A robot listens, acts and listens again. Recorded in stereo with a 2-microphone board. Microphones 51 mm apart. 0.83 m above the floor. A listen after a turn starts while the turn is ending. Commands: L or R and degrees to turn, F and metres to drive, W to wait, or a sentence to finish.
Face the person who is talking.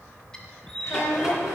L65
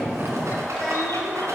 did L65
W
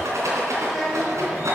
Facing the child speaking.